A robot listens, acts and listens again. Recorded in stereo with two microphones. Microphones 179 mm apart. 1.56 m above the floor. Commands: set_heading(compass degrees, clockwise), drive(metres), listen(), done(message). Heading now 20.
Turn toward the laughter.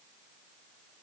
listen()
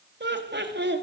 set_heading(110)
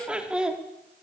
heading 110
done("Facing the laughter.")